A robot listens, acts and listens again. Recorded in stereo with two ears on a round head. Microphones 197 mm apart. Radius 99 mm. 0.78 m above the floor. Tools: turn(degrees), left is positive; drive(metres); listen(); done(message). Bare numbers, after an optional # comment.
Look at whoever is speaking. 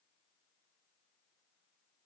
listen()
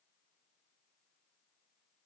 listen()
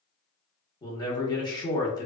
# The man speaking: about 20° left or 160° left.
turn(20)
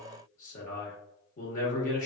# So it is at 140° left.
turn(140)
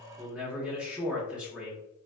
done("Facing the man speaking.")